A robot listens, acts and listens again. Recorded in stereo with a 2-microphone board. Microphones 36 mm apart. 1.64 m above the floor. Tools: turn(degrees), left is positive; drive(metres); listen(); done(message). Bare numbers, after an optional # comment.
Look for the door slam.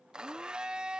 listen()
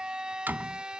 # The door slam: about 60° right or 120° right.
turn(-60)
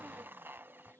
listen()
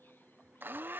done("I heard a door slam, but can't make it out now. It was about straight ahead or 60° right.")